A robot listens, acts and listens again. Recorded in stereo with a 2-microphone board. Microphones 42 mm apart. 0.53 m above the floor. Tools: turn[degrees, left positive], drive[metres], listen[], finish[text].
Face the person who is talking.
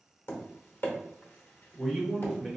Action: turn[30]
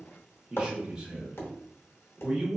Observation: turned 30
Thought: So it is at 30° right.
Action: turn[-30]
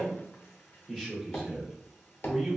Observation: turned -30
Action: finish[Found it: a man speaking, straight ahead, 1 to 2 m away.]